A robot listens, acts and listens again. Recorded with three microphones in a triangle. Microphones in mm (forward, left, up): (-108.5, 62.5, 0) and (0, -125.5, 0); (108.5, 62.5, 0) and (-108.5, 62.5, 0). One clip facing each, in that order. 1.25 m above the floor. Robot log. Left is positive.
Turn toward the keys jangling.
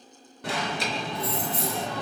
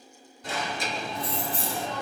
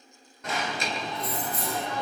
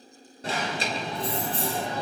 note: The keys jangling: 120° right.
cmd yaw -120
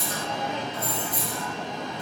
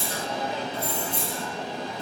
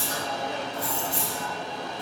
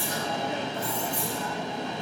end: Found it: keys jangling, straight ahead, 1 to 2 m away.